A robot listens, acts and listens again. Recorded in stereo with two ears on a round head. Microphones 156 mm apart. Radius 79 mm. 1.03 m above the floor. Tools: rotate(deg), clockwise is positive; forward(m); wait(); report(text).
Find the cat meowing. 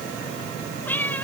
rotate(-30)
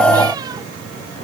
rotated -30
wait()
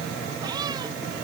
wait()
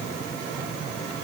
report("I heard a cat meowing, but can't make it out now. It was about 20° right or 140° left.")